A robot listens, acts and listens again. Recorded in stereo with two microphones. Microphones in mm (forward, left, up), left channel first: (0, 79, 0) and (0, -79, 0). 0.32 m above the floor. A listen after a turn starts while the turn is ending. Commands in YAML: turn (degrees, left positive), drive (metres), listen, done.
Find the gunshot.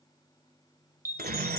turn: -90
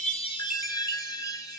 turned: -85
done: "Facing where the gunshot came from. I can't hear it now."